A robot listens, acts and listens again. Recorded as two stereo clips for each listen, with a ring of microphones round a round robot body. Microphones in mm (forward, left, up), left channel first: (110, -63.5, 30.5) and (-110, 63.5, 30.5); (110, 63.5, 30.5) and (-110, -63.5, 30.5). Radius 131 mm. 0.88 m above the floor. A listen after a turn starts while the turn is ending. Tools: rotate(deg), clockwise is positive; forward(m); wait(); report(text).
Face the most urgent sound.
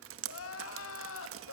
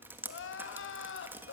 report("Found it: crying, straight ahead, 1 to 2 m away.")